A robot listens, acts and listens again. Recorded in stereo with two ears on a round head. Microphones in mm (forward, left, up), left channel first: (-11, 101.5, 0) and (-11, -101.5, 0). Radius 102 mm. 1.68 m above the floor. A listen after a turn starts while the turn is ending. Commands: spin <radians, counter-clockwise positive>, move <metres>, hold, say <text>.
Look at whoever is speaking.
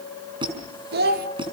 spin -0.79
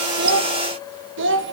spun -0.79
spin -2.18
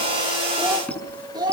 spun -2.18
spin -0.35
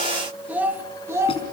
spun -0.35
spin -0.26
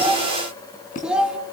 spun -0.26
say Found it: a child speaking, straight ahead.